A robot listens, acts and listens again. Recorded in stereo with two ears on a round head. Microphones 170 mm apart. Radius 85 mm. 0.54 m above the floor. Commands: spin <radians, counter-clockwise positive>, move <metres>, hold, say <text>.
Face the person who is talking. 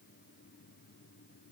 hold
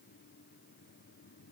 hold
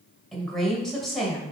spin 0.52
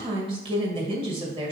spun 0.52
spin -0.52
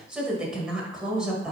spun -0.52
say Facing the woman speaking.